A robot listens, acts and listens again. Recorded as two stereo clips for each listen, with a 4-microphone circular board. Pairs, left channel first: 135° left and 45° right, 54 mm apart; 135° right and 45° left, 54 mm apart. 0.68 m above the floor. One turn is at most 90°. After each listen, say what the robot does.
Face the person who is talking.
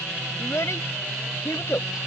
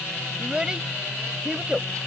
Turn 90° left.
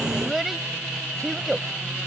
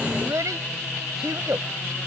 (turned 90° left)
Turn 45° left.
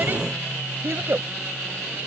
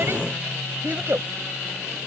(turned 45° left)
Facing the child speaking.